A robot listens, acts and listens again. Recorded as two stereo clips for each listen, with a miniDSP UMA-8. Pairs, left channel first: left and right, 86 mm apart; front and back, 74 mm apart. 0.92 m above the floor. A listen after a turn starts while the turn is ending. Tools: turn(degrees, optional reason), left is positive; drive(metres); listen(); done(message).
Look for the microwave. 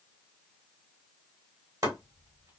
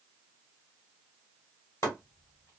listen()
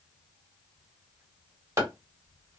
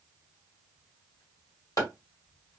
listen()
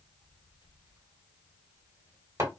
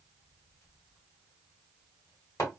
done("I can't make out a microwave, only chopping.")